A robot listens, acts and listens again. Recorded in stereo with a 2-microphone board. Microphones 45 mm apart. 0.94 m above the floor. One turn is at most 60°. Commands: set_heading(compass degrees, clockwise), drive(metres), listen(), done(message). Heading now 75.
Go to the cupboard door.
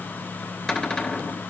set_heading(60)
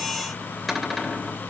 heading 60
drive(1.0)
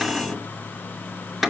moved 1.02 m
drive(1.0)
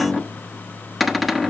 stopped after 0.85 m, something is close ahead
done("Arrived at the cupboard door, straight ahead.")